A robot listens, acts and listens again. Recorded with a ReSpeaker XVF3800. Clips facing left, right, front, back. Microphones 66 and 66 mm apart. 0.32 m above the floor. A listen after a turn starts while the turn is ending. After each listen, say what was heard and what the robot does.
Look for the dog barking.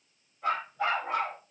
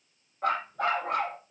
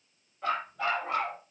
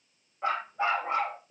The dog barking: 120° right. Turn 120° right.
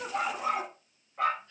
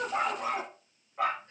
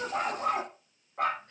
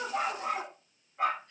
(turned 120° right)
Facing the dog barking, over 4 m away.